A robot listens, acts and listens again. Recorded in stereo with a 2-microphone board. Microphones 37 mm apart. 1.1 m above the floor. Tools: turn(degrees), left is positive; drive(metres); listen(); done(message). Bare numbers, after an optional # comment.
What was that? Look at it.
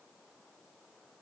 listen()
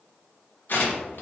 # The tearing paper: about 60° left or 120° left.
turn(60)
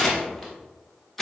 done("Facing the tearing paper.")